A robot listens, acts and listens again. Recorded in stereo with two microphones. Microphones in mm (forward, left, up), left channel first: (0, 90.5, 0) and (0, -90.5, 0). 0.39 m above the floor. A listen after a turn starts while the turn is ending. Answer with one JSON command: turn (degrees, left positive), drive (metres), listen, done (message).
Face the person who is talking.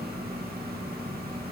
{"listen": true}
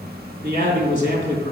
{"turn": 50}
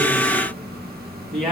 {"done": "Facing the man speaking."}